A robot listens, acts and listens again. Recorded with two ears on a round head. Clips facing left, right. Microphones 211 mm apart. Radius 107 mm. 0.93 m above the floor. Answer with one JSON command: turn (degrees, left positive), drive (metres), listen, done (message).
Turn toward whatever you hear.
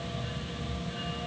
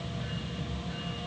{"listen": true}
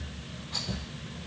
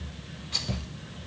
{"turn": -45}
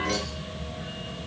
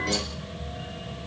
{"listen": true}
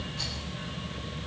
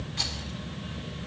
{"turn": -90}
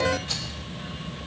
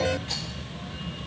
{"turn": 10}
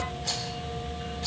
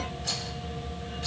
{"done": "Facing the rattle, 2 to 4 m away."}